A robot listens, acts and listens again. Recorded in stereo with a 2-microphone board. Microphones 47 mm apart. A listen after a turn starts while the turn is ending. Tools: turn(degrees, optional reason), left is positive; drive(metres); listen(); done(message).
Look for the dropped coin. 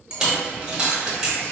turn(degrees=-15, reason="The dropped coin: about 15° right or 165° right.")
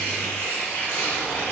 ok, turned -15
listen()
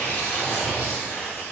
done("I heard a dropped coin, but can't make it out now. It was about straight ahead or 150° right.")